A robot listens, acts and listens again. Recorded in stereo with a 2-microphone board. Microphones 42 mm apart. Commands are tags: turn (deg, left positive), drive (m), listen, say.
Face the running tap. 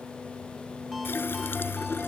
<turn deg="65"/>
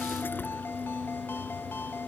<listen/>
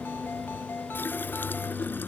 <turn deg="50"/>
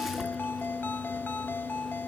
<listen/>
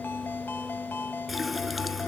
<say>Facing the running tap.</say>